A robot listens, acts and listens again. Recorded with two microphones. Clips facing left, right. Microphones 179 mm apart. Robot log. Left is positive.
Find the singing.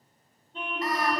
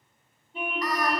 note: The singing: about 30° left or 150° left.
cmd yaw +30
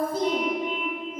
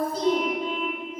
note: So it is at 125° left.
cmd yaw +125
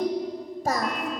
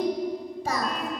note: The singing is now 45° left.
cmd yaw +45
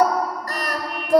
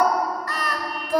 note: The singing is now 40° left.
cmd yaw +40
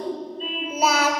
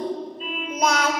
end: Found it: singing, straight ahead.